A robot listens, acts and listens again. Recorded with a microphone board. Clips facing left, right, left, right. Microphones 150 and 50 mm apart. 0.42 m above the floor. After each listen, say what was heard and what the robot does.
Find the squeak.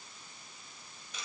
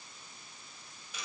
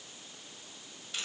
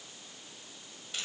Keep listening.
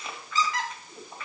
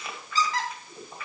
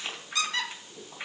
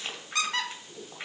The squeak: about 35° right or 145° right. Turn 35° right.
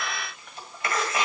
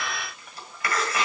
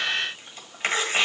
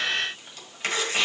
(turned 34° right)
Keep listening.
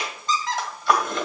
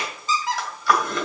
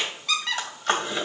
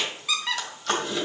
Facing the squeak.